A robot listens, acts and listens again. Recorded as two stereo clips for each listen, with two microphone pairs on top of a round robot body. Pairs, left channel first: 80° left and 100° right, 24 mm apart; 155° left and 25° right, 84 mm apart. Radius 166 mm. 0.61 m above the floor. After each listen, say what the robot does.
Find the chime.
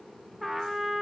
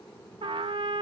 Keep listening.
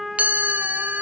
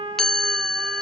Turn 125° right.
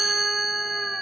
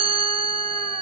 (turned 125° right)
Turn 15° right.
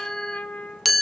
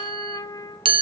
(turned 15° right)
Facing the chime.